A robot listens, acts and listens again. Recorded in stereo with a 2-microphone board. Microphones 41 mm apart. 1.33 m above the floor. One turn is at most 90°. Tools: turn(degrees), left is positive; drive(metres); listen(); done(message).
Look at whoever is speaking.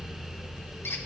listen()
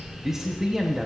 turn(degrees=-30)
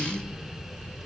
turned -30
listen()
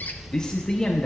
turn(degrees=20)
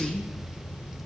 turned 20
done("Facing the man speaking, under 1 m away.")